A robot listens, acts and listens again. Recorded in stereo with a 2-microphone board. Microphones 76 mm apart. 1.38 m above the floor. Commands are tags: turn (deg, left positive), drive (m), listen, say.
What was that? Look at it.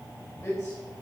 <turn deg="40"/>
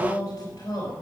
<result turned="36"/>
<turn deg="100"/>
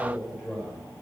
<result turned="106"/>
<turn deg="-10"/>
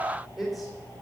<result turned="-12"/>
<say>Found it: a man speaking, straight ahead, over 4 m away.</say>